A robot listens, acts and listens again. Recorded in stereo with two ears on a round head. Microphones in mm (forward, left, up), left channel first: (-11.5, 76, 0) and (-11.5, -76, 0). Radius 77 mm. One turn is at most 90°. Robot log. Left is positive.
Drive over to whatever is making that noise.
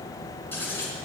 cmd yaw +30
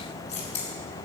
note: So it is at 135° left.
cmd yaw +90
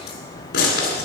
note: The scissors is now 60° left.
cmd yaw +60
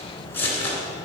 note: The scissors is now 10° left.
cmd yaw +10
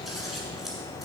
cmd fwd 1.0
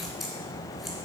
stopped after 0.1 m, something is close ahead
cmd idle
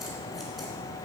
cmd idle
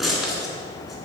end: Blocked. The scissors is further on, straight ahead.